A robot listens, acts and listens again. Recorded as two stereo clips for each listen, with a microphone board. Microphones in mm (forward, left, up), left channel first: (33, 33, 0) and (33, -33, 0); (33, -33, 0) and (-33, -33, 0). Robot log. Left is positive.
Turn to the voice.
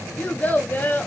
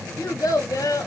note: The child speaking: 25° left.
cmd yaw +25
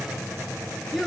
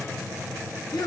end: Found it: a child speaking, straight ahead.